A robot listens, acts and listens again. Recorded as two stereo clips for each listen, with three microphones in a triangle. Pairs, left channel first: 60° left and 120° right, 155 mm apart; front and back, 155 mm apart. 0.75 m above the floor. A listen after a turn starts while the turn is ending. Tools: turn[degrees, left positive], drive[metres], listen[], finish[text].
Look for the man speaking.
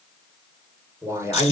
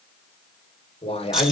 Thought: The man speaking: 45° right.
Action: turn[-45]
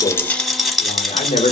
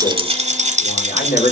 Thought: The man speaking is now 20° left.
Action: turn[20]
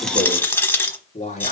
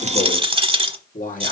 Thought: The man speaking is now 25° left.
Action: turn[25]
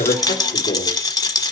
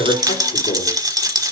Action: listen[]
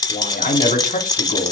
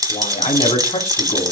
Thought: The man speaking is now 35° left.
Action: turn[35]
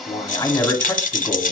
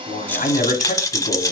Thought: The man speaking is now 15° right.
Action: turn[-15]
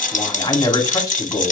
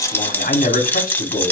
Action: finish[Found it: a man speaking, straight ahead, 2 to 4 m away.]